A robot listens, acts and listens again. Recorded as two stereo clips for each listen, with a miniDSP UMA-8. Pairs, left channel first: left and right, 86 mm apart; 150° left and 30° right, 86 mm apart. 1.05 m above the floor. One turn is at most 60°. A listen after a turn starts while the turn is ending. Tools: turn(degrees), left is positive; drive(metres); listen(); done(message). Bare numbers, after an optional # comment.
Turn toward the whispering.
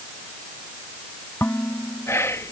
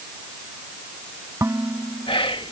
# The whispering: 145° left.
turn(60)
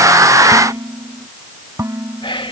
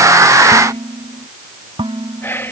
# The whispering is now 85° left.
turn(60)
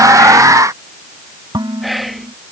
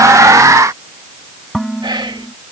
done("Found it: whispering, straight ahead.")